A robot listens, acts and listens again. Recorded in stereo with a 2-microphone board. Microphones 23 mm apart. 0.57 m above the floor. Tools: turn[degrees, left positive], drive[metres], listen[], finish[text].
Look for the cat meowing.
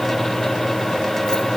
Action: listen[]
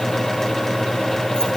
Action: listen[]
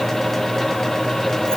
Action: finish[I can't make out a cat meowing to turn to.]